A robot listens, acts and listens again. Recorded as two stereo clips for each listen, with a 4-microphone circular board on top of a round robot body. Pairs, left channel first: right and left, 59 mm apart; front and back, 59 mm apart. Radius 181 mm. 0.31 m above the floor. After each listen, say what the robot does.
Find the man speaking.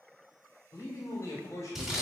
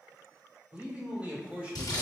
Turn 115° right.
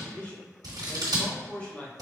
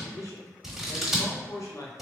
Turn 20° right.
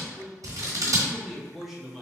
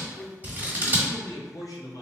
Facing the man speaking, 1 to 2 m away.